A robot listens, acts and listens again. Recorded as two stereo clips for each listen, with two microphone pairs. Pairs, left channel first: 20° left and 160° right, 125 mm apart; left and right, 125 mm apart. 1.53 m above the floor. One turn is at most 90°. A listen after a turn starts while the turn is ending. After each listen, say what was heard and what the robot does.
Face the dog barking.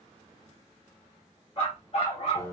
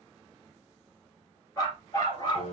The dog barking: 50° left. Turn 50° left.
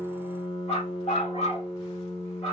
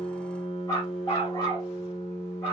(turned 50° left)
The dog barking is now 55° left. Turn 55° left.
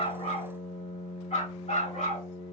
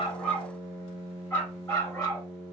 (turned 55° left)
The dog barking is now 30° left. Turn 30° left.
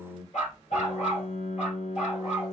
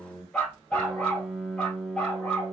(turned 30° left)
The dog barking is now 10° left. Turn 10° left.
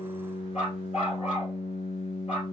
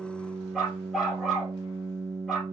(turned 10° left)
Facing the dog barking, 2 to 4 m away.